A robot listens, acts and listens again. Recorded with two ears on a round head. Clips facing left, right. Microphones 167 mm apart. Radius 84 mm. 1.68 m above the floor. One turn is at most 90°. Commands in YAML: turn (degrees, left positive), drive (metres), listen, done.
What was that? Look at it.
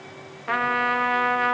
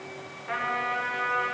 turn: 90
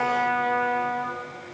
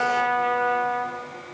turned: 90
done: "Facing the trumpet."